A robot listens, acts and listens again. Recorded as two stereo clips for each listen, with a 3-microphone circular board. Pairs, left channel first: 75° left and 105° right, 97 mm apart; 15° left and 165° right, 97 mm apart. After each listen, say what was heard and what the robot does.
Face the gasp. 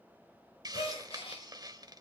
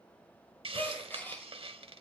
The gasp: 85° left. Turn 85° left.
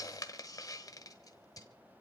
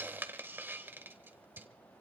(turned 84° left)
Facing where the gasp came from. I can't hear it now.